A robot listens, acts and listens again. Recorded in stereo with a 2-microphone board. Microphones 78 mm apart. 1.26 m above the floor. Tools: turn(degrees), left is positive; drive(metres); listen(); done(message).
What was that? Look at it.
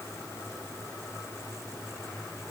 listen()
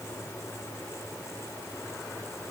listen()
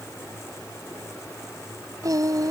turn(degrees=-50)
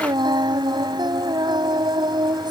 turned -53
turn(degrees=-75)
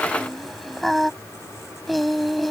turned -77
done("Facing the singing.")